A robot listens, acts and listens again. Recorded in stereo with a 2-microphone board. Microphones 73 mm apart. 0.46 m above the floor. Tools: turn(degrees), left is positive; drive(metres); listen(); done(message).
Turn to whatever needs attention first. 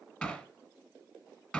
listen()
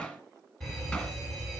turn(degrees=30)
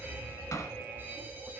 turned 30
turn(degrees=-25)
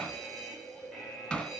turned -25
done("Facing the fire alarm.")